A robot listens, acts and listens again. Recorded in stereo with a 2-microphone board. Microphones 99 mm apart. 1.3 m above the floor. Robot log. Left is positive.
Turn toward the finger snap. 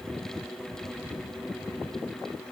cmd idle
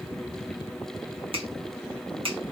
note: The finger snap: about 65° right or 115° right.
cmd yaw -65
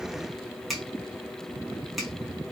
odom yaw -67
end: Found it: a finger snap, straight ahead.